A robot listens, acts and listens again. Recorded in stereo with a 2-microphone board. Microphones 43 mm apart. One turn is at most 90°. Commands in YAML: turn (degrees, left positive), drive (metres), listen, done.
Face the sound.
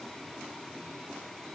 listen: true
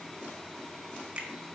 turn: -30
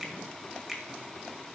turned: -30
done: "Found it: a finger snap, straight ahead, 1 to 2 m away."